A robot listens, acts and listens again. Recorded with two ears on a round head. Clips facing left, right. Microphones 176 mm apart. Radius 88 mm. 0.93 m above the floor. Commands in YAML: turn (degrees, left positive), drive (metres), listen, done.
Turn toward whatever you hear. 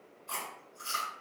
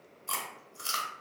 turn: -65
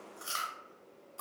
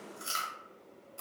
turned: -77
turn: -25
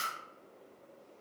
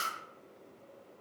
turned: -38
turn: 15
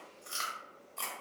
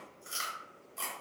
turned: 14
done: "Facing the chewing, under 1 m away."